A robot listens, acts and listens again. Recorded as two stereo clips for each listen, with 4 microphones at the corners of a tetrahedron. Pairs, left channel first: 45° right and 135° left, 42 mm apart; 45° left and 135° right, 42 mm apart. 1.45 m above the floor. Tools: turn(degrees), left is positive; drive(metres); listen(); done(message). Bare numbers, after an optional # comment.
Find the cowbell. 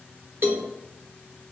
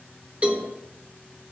# The cowbell: 165° left.
turn(165)
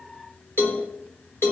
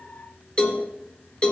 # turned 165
# The cowbell is now 20° right.
turn(-20)
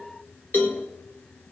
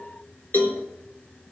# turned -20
done("Facing the cowbell.")